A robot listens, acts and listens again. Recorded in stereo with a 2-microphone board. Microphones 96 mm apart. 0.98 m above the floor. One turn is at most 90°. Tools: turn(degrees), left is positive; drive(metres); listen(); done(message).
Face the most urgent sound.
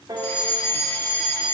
turn(degrees=15)
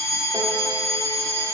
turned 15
turn(degrees=90)
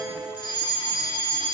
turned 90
turn(degrees=75)
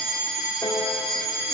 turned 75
done("Facing the fire alarm, 2 to 4 m away.")